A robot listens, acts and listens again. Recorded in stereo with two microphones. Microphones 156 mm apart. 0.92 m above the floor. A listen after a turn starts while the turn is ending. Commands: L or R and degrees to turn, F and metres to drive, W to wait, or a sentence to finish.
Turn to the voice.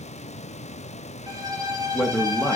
L30
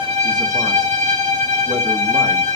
W
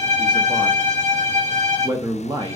R25
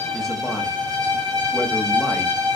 W
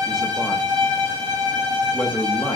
Found it: a man speaking, straight ahead.